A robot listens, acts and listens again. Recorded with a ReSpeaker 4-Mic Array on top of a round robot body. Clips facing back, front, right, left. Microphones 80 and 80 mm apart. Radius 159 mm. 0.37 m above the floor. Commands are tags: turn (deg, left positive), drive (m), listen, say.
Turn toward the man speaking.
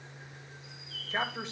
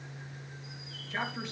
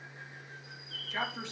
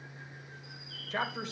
<turn deg="125"/>
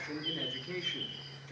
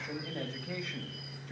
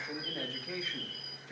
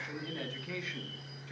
<turn deg="-25"/>
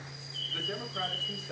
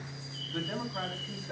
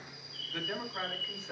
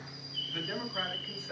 <say>Found it: a man speaking, straight ahead.</say>